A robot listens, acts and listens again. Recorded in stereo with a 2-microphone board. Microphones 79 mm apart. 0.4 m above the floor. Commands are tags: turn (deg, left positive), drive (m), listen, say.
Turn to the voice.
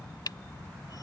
<listen/>
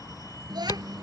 <turn deg="-65"/>
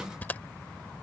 <listen/>
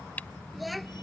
<say>Found it: a child speaking, straight ahead.</say>